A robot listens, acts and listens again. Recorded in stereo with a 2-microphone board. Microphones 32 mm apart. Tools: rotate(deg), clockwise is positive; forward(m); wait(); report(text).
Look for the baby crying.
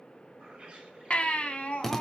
rotate(-45)
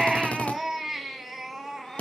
report("Found it: a baby crying, straight ahead, 1 to 2 m away.")